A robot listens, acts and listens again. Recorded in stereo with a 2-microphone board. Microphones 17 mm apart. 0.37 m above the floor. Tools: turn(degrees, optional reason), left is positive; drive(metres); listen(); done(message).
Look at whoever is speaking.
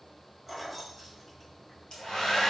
listen()
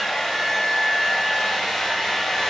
listen()
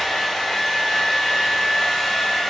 done("I can't make out anyone speaking to turn to.")